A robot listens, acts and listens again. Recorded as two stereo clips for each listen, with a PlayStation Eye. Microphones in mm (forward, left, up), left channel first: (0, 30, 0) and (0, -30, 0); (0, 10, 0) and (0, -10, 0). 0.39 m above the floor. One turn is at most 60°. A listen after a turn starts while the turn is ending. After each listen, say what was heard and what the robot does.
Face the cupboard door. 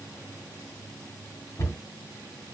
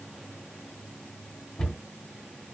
The cupboard door: about 60° left or 120° left. Turn 60° left.
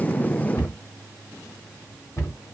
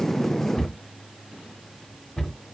So it is at 55° left. Turn 55° left.
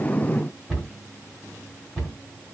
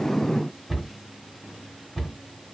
Facing the cupboard door, 2 to 4 m away.